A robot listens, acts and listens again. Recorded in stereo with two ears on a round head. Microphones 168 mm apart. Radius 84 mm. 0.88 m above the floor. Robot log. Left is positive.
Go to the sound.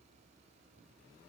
cmd idle
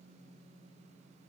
cmd idle
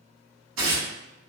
cmd yaw -90
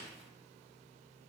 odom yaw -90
cmd idle
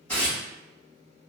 note: The tearing paper is now 10° left.
cmd yaw +10
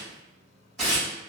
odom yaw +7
cmd fwd 1.0
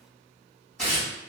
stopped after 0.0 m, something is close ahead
end: Something is in my way. I am facing the tearing paper but have not reached it.